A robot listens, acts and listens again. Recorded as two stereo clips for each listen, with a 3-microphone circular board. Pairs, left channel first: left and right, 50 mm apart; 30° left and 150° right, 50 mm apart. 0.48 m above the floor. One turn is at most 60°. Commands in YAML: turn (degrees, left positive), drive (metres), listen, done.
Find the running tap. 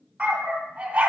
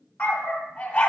listen: true
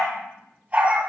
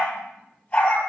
listen: true
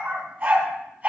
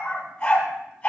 done: "I can't make out a running tap, only a dog barking."